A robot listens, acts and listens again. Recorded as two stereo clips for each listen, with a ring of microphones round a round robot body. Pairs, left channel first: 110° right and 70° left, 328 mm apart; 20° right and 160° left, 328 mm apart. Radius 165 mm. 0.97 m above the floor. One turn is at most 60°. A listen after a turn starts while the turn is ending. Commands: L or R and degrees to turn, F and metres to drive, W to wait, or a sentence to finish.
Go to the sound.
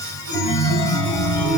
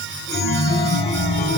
R60
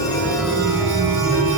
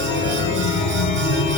R10
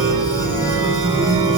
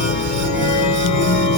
F1.0
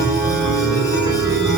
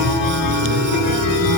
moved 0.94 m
R10
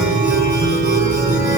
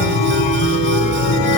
F1.0
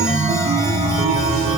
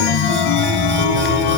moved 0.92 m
F1.0
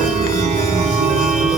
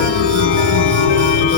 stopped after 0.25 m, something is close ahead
Arrived at the chime, straight ahead.